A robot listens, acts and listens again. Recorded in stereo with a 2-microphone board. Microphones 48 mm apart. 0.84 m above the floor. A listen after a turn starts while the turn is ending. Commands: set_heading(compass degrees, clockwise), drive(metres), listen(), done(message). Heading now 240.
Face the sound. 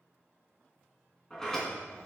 set_heading(210)
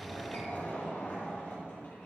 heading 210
set_heading(70)
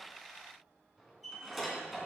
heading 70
done("Found it: a sliding door, straight ahead, 2 to 4 m away.")